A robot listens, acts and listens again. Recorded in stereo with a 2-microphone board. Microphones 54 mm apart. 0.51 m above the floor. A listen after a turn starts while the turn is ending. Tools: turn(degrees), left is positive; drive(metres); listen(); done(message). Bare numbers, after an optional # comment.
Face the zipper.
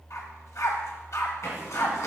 # The zipper: about 70° left or 110° left.
turn(70)
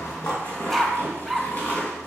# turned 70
# So it is at 40° left.
turn(40)
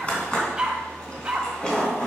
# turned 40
# The zipper is now 15° left.
turn(15)
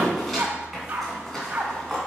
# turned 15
done("Facing the zipper, 2 to 4 m away.")